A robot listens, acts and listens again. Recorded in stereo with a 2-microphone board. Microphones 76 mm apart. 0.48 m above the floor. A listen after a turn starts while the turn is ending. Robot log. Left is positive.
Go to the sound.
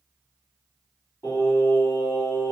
note: The singing: about 65° left or 115° left.
cmd yaw +65
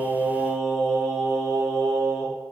cmd fwd 1.0
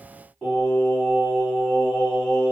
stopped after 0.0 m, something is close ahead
end: Blocked. The singing is further on, straight ahead.